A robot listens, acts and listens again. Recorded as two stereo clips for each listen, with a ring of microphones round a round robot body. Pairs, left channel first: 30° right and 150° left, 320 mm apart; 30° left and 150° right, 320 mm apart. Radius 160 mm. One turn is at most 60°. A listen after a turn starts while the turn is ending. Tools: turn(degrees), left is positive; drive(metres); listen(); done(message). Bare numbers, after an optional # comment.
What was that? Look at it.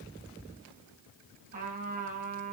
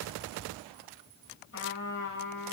# The trumpet: 85° left.
turn(60)
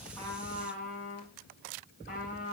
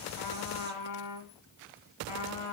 # The trumpet is now 35° left.
turn(35)
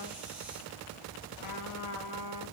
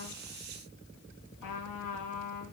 done("Facing the trumpet, 2 to 4 m away.")